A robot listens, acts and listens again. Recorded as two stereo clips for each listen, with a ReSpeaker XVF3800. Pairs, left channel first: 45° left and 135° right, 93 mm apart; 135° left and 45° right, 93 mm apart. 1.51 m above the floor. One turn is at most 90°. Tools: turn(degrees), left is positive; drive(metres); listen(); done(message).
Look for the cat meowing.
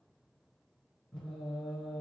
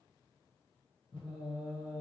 listen()
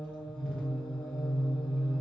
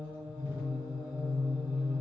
listen()
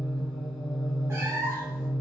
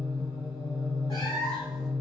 turn(degrees=90)
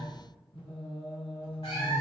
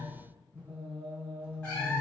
turn(degrees=60)
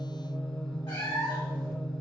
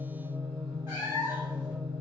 turn(degrees=10)
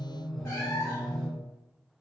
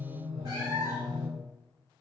done("Found it: a cat meowing, straight ahead, 1 to 2 m away.")